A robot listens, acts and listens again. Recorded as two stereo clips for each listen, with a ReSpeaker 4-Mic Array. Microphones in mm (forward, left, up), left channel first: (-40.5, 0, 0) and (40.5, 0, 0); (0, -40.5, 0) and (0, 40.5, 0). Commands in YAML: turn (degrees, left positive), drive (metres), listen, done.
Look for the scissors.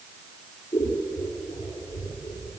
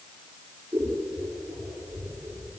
turn: 145
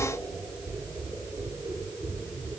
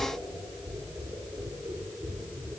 turn: 40
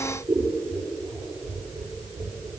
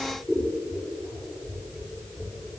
done: "Found it: scissors, straight ahead, over 4 m away."